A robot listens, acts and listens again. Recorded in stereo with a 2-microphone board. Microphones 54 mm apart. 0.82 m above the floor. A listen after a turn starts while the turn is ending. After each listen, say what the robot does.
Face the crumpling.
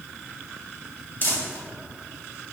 Turn 40° left.
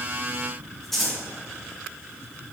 Found it: crumpling, straight ahead.